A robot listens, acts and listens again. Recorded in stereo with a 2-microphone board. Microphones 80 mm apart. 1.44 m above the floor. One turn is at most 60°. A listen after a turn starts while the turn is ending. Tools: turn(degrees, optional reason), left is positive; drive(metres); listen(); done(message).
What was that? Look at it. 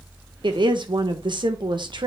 turn(degrees=-60, reason="The woman speaking: about 65° right or 115° right.")
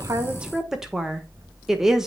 done("Found it: a woman speaking, straight ahead.")